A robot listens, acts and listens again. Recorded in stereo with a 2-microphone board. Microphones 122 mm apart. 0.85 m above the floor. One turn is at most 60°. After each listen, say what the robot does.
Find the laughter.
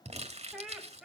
Turn 30° left.
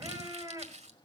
Turn 25° right.
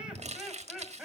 Facing the laughter, over 4 m away.